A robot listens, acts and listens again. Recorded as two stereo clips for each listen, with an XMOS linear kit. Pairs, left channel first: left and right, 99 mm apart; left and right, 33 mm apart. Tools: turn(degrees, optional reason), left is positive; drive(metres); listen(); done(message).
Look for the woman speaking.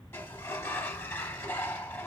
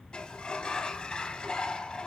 listen()
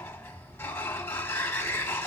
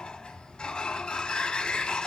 listen()
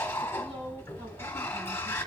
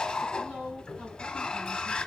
turn(degrees=-90)
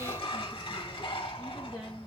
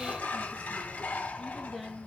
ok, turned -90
done("Facing the woman speaking, over 4 m away.")